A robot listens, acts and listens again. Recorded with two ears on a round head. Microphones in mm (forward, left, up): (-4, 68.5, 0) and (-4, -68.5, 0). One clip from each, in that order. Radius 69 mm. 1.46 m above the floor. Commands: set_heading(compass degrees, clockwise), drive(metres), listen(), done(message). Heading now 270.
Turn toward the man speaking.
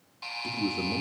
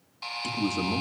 set_heading(0)
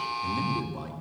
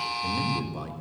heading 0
set_heading(10)
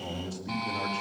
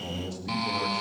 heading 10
done("Facing the man speaking, over 4 m away.")